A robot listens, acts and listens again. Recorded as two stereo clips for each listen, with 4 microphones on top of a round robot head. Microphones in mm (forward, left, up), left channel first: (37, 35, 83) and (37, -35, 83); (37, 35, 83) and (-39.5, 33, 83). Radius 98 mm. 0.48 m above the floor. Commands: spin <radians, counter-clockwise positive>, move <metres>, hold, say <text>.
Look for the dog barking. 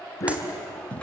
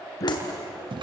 spin 0.79
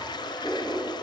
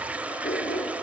say Facing the dog barking, 2 to 4 m away.